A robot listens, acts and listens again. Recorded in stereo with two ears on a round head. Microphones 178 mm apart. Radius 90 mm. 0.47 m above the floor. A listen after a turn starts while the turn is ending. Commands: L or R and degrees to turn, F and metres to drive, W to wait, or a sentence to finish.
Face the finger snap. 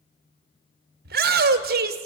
W
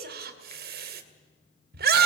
W
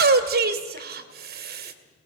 I can't make out a finger snap, only a shout.